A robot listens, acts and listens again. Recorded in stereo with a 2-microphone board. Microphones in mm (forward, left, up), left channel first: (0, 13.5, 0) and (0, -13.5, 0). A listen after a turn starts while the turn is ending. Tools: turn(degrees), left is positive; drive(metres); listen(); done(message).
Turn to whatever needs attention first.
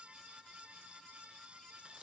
listen()
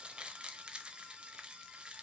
listen()
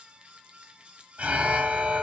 turn(degrees=-60)
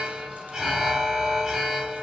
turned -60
turn(degrees=-20)
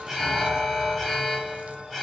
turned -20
done("Facing the alarm, 1 to 2 m away.")